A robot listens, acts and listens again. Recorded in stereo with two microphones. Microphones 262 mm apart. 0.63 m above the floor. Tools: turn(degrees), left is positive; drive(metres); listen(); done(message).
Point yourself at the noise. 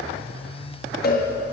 turn(degrees=40)
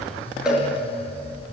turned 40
done("Facing the cowbell.")